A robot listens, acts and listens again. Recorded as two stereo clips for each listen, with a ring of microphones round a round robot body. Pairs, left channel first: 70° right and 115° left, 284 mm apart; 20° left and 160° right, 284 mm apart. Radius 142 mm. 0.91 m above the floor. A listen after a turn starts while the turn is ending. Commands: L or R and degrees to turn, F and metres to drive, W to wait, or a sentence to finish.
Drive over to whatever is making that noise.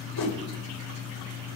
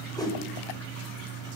R55
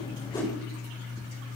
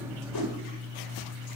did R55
W
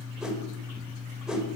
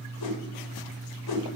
L25
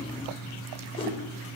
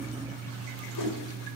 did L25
F1.0
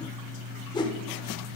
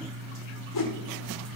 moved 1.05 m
L10
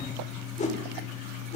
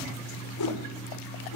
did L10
F1.0
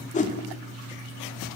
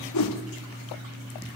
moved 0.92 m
F1.0
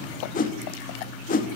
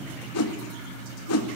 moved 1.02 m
R10
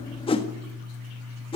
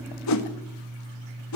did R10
F1.0
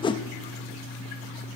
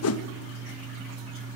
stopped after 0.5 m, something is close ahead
I am next to the whoosh.